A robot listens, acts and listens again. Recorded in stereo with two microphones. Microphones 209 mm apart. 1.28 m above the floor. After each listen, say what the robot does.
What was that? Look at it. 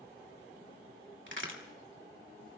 Turn 65° right.
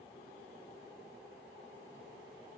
Keep listening.
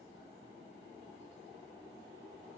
I heard a crack, but can't make it out now. It was about straight ahead or 50° right.